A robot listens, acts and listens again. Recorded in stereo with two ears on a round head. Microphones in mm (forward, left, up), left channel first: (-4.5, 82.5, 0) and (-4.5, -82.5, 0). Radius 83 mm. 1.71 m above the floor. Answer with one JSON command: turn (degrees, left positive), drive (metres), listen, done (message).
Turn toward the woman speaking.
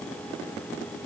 {"listen": true}
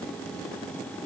{"listen": true}
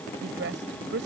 {"turn": -70}
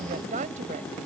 {"turn": -40}
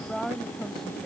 {"done": "Found it: a woman speaking, straight ahead."}